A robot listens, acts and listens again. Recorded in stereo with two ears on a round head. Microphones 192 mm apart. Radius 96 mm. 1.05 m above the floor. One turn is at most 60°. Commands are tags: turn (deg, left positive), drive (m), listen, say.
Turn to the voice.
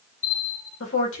<turn deg="60"/>
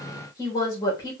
<turn deg="20"/>
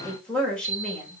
<say>Found it: a woman speaking, straight ahead.</say>